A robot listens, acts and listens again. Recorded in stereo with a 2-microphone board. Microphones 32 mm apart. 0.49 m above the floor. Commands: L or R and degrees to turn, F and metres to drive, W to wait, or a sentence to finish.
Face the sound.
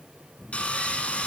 L45
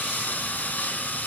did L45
L90
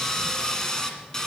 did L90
L20
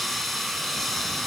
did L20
Found it: sawing, straight ahead, 1 to 2 m away.